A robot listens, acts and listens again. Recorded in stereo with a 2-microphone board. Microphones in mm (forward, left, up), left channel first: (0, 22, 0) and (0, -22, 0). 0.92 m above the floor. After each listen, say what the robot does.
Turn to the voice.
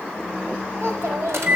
Turn 65° right.
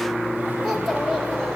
Facing the child speaking.